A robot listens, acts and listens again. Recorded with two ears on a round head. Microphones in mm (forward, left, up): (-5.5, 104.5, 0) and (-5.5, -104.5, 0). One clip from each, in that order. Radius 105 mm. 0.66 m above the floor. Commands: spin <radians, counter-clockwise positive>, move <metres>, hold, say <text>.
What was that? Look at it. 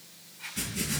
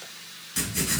spin -1.22
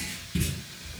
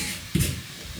spin -0.70
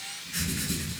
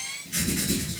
spin -0.35
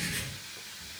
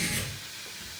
spin -0.17
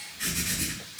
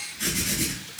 say Found it: writing, straight ahead.